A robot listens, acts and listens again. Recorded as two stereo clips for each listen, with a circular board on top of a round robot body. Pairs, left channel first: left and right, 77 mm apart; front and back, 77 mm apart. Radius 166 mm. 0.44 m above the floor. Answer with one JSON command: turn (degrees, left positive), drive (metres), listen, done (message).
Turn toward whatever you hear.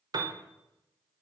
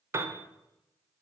{"turn": -125}
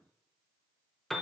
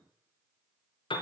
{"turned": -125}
{"done": "Facing the piano."}